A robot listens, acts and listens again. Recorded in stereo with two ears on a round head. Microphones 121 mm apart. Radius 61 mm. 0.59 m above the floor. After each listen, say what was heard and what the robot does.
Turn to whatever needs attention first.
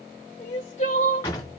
The crying: about 60° left or 120° left. Turn 60° left.
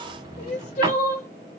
So it is at 60° left. Turn 60° left.
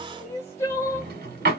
The crying is now 20° left. Turn 20° left.
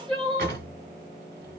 Found it: crying, straight ahead.